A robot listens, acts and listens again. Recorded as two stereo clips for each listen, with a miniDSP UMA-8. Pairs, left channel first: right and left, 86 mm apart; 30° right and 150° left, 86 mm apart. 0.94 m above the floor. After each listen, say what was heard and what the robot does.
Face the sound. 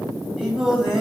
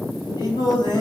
Found it: singing, straight ahead, 2 to 4 m away.